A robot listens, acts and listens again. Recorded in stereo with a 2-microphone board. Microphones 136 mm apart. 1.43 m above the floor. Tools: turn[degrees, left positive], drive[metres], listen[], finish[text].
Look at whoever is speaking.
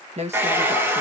Thought: The woman speaking: about 55° right or 125° right.
Action: turn[-55]
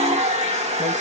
Action: listen[]
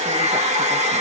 Action: listen[]
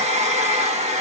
Action: finish[I heard a woman speaking, but can't make it out now. It was about straight ahead or 70° right.]